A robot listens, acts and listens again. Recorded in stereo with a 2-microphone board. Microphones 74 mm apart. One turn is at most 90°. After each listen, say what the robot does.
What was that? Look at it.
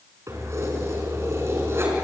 Turn 35° right.
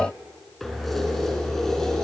Facing the keys jangling.